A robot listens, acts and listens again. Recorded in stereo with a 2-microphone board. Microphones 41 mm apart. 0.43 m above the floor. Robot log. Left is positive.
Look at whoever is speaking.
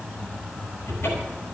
cmd idle
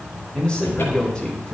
note: The man speaking: about 25° left or 155° left.
cmd yaw +25
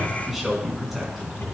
end: Found it: a man speaking, straight ahead.